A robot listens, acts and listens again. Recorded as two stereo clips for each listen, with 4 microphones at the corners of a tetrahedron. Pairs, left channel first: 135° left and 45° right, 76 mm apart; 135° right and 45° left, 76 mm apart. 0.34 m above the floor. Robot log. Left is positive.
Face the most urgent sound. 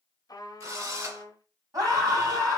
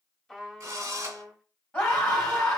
note: The scream: 70° right.
cmd yaw -70
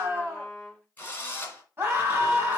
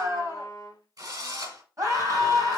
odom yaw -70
note: The scream is now 10° left.
cmd yaw +10
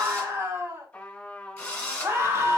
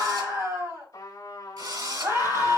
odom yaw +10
end: Found it: a scream, straight ahead, 2 to 4 m away.